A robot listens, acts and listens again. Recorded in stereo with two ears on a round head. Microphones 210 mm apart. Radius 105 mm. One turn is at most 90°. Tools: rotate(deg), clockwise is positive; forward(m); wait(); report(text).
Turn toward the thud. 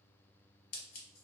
wait()
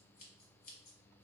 wait()
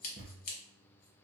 rotate(45)
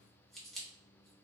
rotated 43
wait()
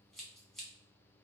report("I heard a thud, but can't make it out now. It was about straight ahead or 95° right.")